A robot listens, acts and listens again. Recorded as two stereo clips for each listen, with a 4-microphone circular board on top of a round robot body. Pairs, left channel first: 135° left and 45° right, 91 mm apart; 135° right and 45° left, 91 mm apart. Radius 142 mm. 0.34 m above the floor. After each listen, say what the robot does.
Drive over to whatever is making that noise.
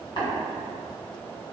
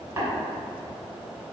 Turn 105° left.
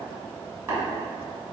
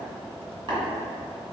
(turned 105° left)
Turn 15° left.
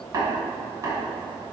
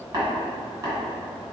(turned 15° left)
Drive 1.0 m forward.
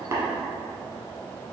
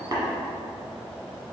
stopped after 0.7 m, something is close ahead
I am next to the tapping.